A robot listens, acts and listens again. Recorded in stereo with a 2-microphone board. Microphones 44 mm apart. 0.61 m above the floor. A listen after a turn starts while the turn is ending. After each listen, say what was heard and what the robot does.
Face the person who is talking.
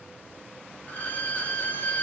Keep listening.
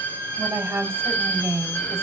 The woman speaking: about 70° right or 110° right. Turn 70° right.
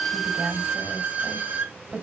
So it is at 30° right. Turn 30° right.
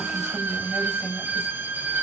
The woman speaking is now 20° right. Turn 20° right.
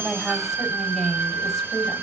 Found it: a woman speaking, straight ahead.